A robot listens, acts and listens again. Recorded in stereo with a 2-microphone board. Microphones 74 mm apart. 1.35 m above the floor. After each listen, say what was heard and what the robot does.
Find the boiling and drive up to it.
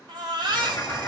The boiling: about 50° left or 130° left. Turn 50° left.
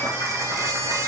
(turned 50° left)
Keep listening.
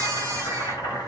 So it is at 80° left. Turn 80° left.
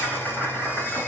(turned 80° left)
The boiling is now 15° left. Turn 15° left.
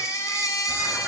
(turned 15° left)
Keep listening.
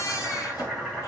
Drive 1.0 m forward.
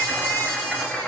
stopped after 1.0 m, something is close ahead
I am next to the boiling.